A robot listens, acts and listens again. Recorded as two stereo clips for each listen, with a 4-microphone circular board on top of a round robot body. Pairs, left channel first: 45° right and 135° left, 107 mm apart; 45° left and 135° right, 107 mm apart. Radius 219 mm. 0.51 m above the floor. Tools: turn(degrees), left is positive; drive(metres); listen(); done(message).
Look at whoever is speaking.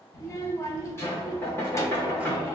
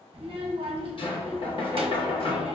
turn(degrees=-105)
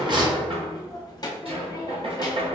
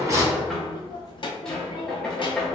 done("Facing the child speaking, under 1 m away.")